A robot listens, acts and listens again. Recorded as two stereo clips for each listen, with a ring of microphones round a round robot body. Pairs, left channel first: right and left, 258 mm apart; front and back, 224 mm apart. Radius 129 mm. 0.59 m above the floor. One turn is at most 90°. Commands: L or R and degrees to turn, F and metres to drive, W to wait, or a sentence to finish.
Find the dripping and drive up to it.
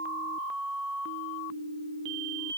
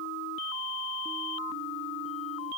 W
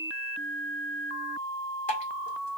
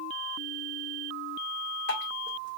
R35
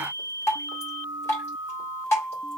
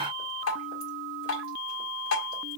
R10
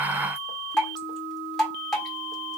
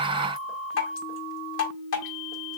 F1.0
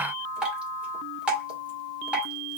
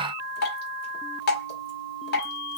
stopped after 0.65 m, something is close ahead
Arrived at the dripping, straight ahead.